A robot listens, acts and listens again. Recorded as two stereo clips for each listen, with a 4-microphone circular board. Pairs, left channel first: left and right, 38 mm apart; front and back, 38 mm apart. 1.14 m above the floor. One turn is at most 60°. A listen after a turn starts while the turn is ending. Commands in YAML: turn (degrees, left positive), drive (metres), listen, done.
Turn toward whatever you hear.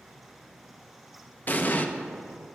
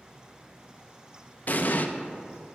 turn: 45
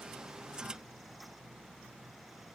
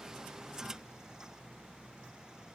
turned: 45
done: "Facing where the explosion came from. I can't hear it now."